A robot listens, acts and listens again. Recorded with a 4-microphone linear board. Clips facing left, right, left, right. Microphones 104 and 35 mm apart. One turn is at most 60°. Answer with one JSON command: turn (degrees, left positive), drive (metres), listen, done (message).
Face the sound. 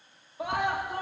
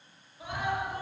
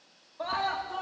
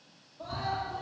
{"turn": 60}
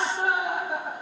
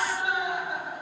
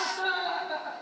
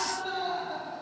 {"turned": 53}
{"turn": 50}
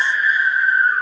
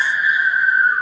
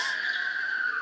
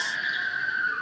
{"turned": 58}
{"turn": -10}
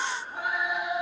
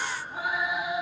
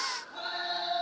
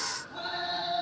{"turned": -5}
{"done": "Found it: a scream, straight ahead."}